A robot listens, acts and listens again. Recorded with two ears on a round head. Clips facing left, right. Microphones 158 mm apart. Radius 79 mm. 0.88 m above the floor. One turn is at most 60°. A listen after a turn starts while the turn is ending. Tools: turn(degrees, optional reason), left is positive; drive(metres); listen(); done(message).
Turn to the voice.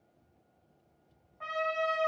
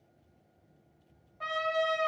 listen()
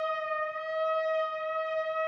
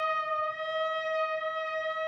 listen()
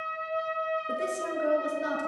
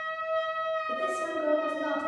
turn(degrees=40, reason="The woman speaking: about 40° left or 140° left.")
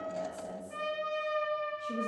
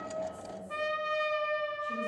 turn(degrees=35, reason="The woman speaking: about 35° left or 145° left.")
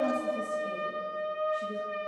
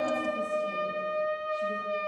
listen()
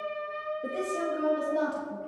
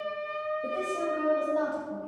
turn(degrees=20, reason="So it is at 20° left.")
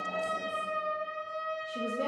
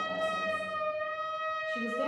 listen()
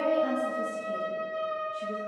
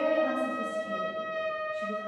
turn(degrees=10, reason="The woman speaking is now 10° left.")
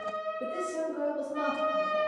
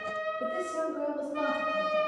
done("Facing the woman speaking.")